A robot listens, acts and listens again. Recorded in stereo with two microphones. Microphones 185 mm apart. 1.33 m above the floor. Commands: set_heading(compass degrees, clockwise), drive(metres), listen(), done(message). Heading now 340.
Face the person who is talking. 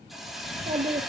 set_heading(15)
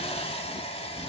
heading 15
listen()
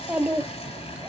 done("Found it: a child speaking, straight ahead.")